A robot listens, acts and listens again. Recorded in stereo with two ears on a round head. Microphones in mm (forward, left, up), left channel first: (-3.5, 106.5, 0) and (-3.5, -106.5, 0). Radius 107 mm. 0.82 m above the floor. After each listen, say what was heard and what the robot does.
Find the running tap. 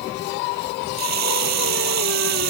Turn 90° right.
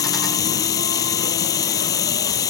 So it is at 15° left. Turn 15° left.
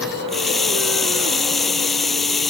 Facing the running tap.